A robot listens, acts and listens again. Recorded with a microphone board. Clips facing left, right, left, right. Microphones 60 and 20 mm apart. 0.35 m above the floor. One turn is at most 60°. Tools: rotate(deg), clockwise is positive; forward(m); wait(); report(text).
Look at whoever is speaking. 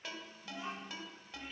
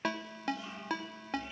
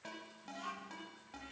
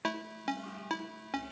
rotate(-25)
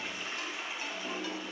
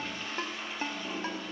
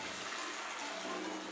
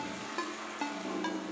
wait()
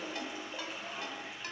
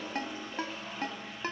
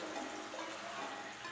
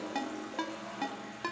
wait()
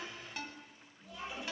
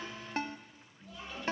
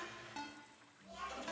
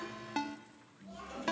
report("Facing the child speaking.")